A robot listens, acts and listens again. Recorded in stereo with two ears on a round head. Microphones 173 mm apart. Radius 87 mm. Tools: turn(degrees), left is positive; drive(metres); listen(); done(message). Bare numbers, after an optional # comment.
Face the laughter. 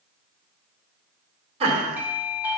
# The laughter: about 30° right or 150° right.
turn(-30)
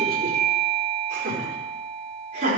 # The laughter: about 40° right or 140° right.
turn(-40)
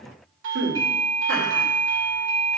# So it is at 105° right.
turn(-105)
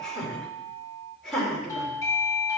done("Facing the laughter.")